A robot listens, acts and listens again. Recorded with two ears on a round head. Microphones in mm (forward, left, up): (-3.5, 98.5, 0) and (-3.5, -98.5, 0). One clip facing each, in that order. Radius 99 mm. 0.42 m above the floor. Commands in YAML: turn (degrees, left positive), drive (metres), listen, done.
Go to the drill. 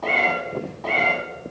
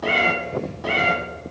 listen: true
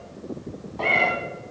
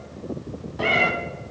listen: true
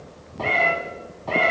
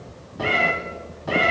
done: "I can't make out a drill to turn to."